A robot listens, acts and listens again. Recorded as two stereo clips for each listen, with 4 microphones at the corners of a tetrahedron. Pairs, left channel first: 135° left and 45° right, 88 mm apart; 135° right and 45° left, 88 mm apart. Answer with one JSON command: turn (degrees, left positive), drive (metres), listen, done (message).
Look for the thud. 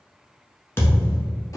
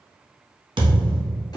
{"turn": 75}
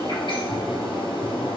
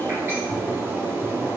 {"done": "I heard a thud from this way, but can't make it out now."}